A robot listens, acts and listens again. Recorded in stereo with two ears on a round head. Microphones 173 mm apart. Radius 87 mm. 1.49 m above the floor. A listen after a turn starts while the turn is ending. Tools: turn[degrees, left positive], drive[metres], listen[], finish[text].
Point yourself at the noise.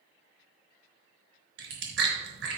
Thought: The chewing: about 60° right or 120° right.
Action: turn[-60]
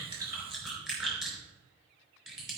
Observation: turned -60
Action: finish[Found it: chewing, straight ahead, 2 to 4 m away.]